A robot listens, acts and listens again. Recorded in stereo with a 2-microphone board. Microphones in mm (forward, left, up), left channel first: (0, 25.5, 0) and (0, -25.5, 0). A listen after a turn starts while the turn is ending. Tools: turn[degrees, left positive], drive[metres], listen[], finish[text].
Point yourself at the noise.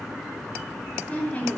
Thought: The woman speaking: about 25° left or 155° left.
Action: turn[25]
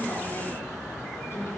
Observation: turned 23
Action: listen[]
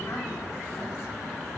Action: listen[]
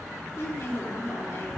Thought: So it is at 135° left.
Action: turn[135]
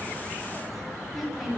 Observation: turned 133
Action: finish[Found it: a woman speaking, straight ahead, 2 to 4 m away.]